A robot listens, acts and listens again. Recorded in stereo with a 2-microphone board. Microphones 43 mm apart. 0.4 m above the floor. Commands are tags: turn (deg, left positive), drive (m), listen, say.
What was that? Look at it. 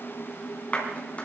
<turn deg="35"/>
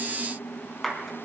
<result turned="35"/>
<say>Found it: a clap, straight ahead, 2 to 4 m away.</say>